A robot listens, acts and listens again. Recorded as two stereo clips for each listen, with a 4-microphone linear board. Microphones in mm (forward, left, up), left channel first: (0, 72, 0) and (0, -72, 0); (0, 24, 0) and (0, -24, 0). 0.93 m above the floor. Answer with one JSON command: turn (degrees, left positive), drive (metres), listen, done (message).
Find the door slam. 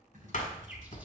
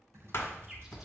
{"turn": 60}
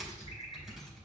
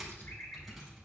{"listen": true}
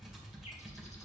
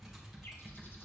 {"done": "I heard a door slam, but can't make it out now. It was about straight ahead or 60° left."}